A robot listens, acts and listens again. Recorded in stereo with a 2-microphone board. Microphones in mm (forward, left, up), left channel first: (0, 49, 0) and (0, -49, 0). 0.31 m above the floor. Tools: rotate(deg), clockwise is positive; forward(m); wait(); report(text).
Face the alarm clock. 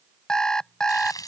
rotate(-30)
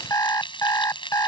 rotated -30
rotate(-140)
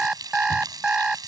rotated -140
rotate(10)
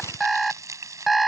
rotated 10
report("Found it: an alarm clock, straight ahead.")